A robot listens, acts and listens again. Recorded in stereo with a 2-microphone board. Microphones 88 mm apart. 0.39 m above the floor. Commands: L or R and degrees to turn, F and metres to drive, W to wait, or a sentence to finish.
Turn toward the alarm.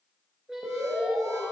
R40
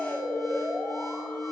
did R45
Facing the alarm, 1 to 2 m away.